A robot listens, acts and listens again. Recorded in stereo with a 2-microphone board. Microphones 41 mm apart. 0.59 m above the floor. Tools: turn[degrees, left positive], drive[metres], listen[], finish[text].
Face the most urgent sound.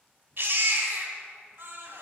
Thought: The baby crying: about 55° right or 125° right.
Action: turn[-55]
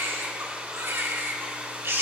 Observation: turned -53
Thought: So it is at 70° right.
Action: turn[-70]
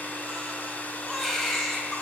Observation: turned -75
Action: finish[Facing the baby crying.]